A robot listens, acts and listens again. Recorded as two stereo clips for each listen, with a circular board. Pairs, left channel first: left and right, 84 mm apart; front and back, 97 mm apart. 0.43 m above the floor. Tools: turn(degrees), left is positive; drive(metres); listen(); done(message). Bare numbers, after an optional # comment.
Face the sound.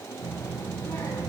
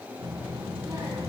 # The child speaking: 130° left.
turn(130)
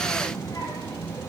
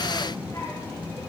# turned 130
# The child speaking is now 50° left.
turn(50)
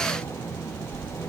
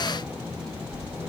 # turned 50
# The child speaking is now 15° left.
turn(15)
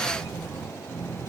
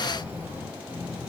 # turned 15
done("Facing the child speaking, 2 to 4 m away.")